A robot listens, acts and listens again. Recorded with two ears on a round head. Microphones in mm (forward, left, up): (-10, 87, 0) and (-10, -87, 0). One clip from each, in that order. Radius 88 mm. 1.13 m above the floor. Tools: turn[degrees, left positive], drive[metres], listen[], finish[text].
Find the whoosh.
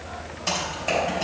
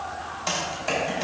Action: listen[]
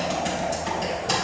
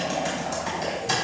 Action: listen[]
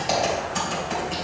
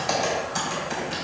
Action: finish[I can't make out a whoosh to turn to.]